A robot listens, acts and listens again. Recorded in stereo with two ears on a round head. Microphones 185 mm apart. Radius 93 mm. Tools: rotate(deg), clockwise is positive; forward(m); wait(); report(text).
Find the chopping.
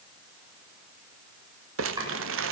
rotate(20)
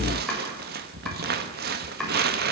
report("Facing the chopping, over 4 m away.")